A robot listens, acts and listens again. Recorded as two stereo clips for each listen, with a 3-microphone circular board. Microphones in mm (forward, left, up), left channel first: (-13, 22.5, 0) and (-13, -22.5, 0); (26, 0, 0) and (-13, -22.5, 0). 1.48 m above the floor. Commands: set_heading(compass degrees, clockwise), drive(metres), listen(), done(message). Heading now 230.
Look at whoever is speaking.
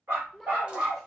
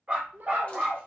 set_heading(50)
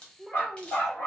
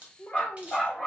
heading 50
done("Found it: a child speaking, straight ahead.")